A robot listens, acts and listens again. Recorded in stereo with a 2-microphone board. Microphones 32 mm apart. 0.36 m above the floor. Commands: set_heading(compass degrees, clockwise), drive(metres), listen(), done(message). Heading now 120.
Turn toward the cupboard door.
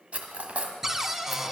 set_heading(150)
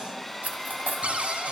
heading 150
set_heading(285)
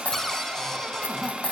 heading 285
set_heading(270)
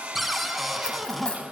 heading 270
done("Facing the cupboard door, 1 to 2 m away.")